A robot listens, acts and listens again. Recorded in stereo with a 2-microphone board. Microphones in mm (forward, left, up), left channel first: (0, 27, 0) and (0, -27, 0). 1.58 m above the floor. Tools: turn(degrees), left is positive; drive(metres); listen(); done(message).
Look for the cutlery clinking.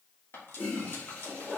turn(degrees=50)
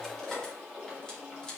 turn(degrees=15)
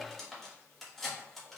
done("Facing the cutlery clinking, 1 to 2 m away.")